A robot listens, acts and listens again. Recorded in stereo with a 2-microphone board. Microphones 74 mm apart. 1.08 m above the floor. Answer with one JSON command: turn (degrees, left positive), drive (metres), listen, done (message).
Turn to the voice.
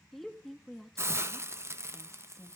{"turn": 30}
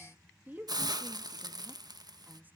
{"turn": -25}
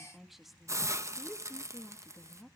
{"done": "Facing the woman speaking, 1 to 2 m away."}